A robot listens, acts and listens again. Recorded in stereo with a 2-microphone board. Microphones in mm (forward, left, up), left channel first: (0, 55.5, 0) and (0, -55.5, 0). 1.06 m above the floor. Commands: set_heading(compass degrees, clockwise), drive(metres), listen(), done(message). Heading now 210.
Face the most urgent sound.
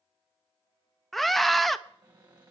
set_heading(180)
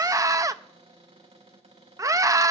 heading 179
set_heading(209)
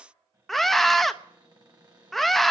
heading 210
done("Found it: a scream, straight ahead, under 1 m away.")